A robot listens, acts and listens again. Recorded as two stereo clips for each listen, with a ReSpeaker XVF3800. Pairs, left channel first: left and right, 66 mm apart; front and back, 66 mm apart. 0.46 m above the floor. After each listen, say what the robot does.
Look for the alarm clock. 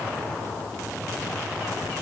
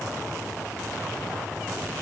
Keep listening.
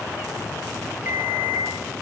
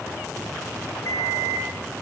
Turn 35° right.
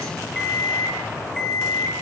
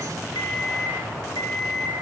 Turn 10° left.
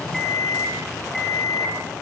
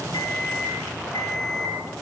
Found it: an alarm clock, straight ahead.